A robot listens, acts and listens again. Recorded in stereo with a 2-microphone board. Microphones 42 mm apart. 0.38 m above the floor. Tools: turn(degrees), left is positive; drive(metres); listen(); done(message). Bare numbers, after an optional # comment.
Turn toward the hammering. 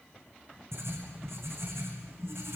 listen()
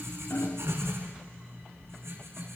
# The hammering: about 60° left or 120° left.
turn(60)
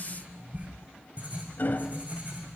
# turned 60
# So it is at 50° left.
turn(50)
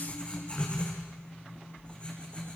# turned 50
listen()
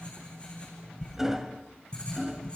# The hammering is now 10° right.
turn(-10)
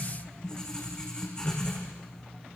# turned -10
listen()
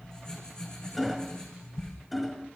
done("Facing the hammering, 1 to 2 m away.")